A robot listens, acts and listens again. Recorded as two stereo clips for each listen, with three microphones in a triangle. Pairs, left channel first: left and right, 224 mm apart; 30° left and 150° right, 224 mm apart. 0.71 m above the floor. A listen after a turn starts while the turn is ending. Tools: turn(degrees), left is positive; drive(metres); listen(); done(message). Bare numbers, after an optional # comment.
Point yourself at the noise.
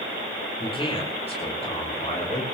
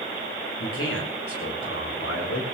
# The man speaking: 30° left.
turn(30)
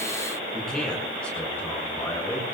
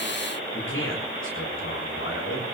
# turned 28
# The man speaking is now 10° left.
turn(10)
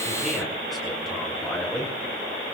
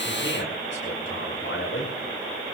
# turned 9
done("Facing the man speaking, over 4 m away.")